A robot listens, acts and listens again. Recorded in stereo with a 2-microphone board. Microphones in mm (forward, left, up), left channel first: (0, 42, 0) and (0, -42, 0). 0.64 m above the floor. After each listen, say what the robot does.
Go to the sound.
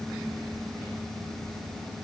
Keep listening.
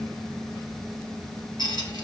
Turn 55° left.
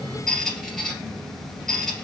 Drive 1.0 m forward.
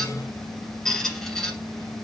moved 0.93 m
Drive 1.0 m forward.
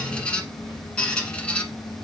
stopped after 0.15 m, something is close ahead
Turn 15° left.
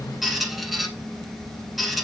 I am next to the squeak.